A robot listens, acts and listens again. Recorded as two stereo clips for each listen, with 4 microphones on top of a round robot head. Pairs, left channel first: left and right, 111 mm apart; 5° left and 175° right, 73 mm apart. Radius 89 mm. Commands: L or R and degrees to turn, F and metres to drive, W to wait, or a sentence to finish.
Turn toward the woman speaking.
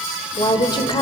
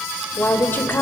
L60
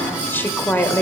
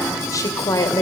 L20
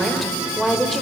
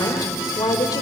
Found it: a woman speaking, straight ahead, 2 to 4 m away.